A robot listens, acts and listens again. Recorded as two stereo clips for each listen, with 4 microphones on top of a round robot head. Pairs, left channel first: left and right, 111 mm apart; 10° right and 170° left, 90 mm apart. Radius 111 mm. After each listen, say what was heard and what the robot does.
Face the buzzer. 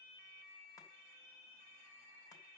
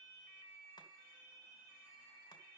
Keep listening.
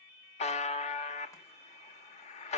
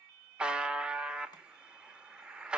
The buzzer: 90° left. Turn 90° left.
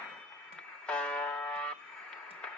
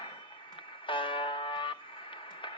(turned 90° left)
The buzzer is now 10° left. Turn 10° left.
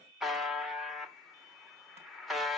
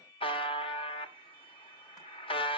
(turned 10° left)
Facing the buzzer, 1 to 2 m away.